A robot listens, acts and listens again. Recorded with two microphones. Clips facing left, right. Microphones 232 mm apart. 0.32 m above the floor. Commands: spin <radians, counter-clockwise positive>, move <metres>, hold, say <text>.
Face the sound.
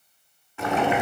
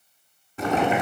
spin -0.70
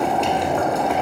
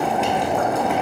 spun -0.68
say Found it: boiling, straight ahead, 1 to 2 m away.